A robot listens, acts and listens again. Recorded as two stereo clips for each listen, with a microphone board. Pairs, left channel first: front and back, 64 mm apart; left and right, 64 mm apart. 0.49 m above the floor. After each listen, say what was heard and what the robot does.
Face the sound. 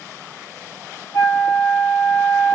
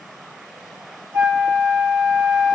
The flute: 35° right. Turn 35° right.
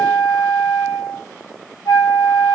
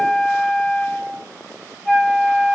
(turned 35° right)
Found it: a flute, straight ahead.